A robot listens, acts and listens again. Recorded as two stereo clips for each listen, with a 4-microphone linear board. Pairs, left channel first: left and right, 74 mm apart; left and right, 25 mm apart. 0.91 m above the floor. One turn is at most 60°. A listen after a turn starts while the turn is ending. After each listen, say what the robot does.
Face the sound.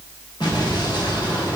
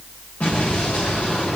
Turn 60° left.
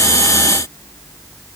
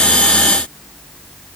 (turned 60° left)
Turn 30° left.
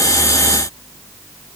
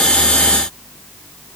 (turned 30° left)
Facing where the explosion came from. I can't hear it now.